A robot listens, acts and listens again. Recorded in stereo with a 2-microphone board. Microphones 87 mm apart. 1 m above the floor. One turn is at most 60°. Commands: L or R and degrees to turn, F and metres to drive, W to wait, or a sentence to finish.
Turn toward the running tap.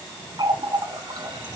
R60
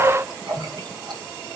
R55
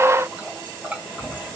R15
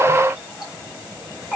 Facing the running tap.